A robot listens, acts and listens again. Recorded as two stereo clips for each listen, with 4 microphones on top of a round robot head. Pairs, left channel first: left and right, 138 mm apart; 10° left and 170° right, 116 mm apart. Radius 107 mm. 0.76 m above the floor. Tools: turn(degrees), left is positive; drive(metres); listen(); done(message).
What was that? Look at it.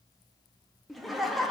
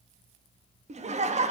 turn(degrees=180)
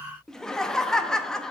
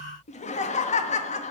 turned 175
done("Facing the laughter.")